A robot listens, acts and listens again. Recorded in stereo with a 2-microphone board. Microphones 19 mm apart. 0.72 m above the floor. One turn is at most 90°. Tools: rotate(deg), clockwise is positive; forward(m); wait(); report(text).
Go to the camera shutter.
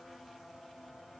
wait()
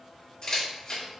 rotate(-40)
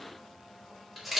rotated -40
forward(1.0)
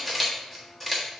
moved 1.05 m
rotate(-10)
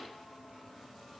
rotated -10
wait()
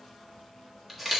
forward(1.0)
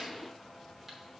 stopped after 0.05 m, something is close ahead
wait()
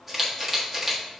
report("I am next to the camera shutter.")